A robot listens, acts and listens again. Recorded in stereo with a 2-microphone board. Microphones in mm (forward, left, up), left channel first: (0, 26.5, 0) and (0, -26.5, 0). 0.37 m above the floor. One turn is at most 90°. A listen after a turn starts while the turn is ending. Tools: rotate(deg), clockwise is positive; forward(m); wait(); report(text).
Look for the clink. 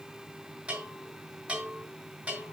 wait()
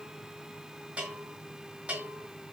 wait()
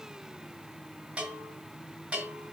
report("I can't make out a clink, only a bell.")